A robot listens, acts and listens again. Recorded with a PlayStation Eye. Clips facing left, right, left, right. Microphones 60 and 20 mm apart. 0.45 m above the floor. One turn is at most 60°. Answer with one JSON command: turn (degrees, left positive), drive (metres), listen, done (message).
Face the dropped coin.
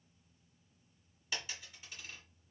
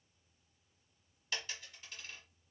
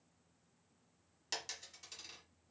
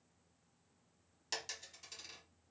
{"turn": 30}
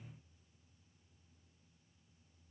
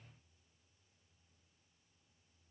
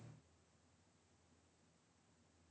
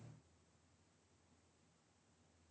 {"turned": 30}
{"listen": true}
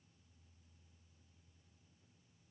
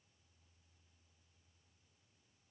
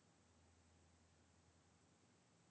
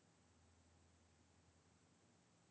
{"done": "I heard a dropped coin, but can't make it out now. It was about 25° right or 145° left."}